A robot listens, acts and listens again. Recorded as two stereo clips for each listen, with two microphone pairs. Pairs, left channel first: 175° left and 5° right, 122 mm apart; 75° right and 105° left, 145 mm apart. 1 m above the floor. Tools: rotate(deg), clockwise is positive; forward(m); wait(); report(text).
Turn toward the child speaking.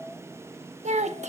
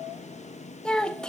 report("Found it: a child speaking, straight ahead, 1 to 2 m away.")